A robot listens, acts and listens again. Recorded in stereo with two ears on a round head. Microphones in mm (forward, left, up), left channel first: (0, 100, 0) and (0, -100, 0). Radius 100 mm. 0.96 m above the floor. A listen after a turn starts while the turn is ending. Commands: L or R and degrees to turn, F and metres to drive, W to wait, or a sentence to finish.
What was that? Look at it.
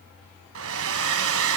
R65
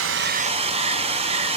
R30
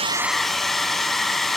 Found it: a hair dryer, straight ahead.